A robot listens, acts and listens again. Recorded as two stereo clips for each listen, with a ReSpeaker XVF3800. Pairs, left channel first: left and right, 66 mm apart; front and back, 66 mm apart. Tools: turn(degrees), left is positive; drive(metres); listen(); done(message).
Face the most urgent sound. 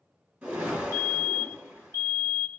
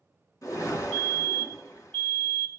turn(degrees=-65)
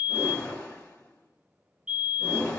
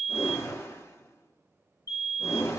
turn(degrees=-10)
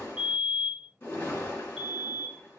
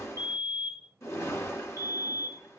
done("Facing the fire alarm, 2 to 4 m away.")